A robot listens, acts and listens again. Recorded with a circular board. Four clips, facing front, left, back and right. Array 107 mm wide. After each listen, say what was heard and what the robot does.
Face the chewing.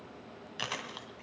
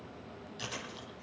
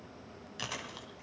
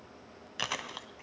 The chewing: 75° right. Turn 75° right.
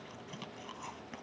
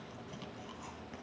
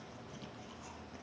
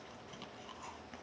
Keep listening.
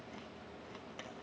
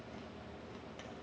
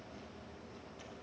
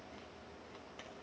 Keep listening.
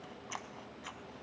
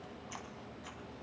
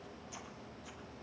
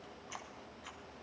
Facing where the chewing came from. I can't hear it now.